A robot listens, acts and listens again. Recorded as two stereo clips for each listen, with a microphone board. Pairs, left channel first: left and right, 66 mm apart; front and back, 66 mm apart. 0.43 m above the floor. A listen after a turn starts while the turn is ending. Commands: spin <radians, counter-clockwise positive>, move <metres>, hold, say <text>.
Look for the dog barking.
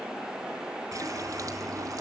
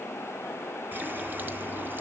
hold
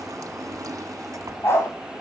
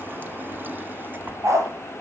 spin 2.36
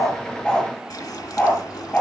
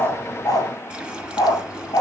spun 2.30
spin 0.44
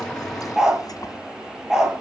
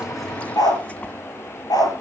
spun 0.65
spin -0.17
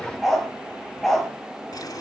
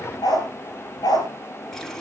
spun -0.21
say Facing the dog barking.